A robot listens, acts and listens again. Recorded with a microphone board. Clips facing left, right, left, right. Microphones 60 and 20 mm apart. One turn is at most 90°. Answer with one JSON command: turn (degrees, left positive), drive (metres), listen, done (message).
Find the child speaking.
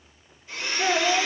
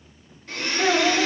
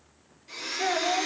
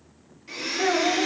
{"turn": -60}
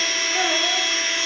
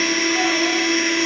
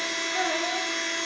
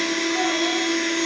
{"listen": true}
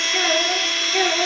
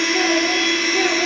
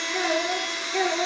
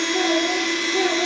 {"turn": 25}
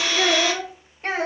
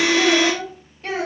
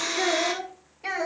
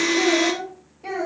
{"turn": 25}
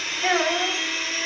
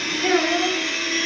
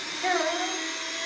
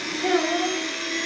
{"done": "Facing the child speaking."}